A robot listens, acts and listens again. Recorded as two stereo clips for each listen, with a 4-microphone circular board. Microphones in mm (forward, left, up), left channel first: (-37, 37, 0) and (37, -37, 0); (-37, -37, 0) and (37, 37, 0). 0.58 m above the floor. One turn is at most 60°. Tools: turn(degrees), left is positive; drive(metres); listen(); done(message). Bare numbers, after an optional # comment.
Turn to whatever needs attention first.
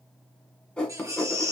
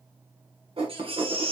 # The baby crying: 15° left.
turn(15)
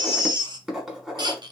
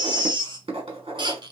done("Found it: a baby crying, straight ahead.")